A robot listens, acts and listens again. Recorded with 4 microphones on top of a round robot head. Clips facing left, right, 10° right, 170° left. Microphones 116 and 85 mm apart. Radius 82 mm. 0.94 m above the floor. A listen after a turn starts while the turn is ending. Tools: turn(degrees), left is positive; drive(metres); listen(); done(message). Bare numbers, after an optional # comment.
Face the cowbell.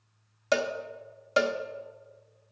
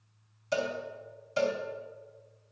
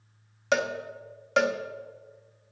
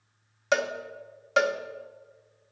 # The cowbell: 80° left.
turn(80)
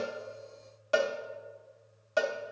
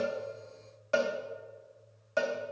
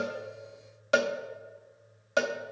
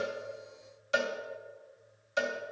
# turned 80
# The cowbell is now 15° left.
turn(15)
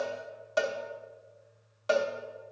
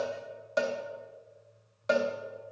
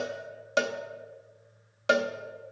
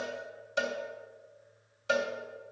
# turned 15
done("Facing the cowbell, under 1 m away.")